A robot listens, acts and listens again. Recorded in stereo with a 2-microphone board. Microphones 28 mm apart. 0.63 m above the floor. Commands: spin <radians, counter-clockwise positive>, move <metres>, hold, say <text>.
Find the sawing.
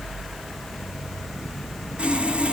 spin -0.87
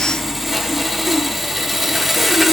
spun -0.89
spin -0.17
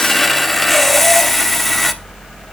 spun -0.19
say Facing the sawing.